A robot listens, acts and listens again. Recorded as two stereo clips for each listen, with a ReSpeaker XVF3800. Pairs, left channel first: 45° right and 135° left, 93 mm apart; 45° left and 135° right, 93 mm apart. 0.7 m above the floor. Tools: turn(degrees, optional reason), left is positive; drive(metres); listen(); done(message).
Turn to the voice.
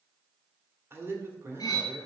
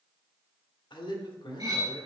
turn(degrees=75, reason="The man speaking: 75° left.")
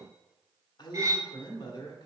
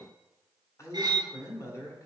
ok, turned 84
turn(degrees=-10, reason="The man speaking is now 10° right.")
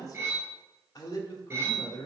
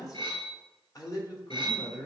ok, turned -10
done("Facing the man speaking, 1 to 2 m away.")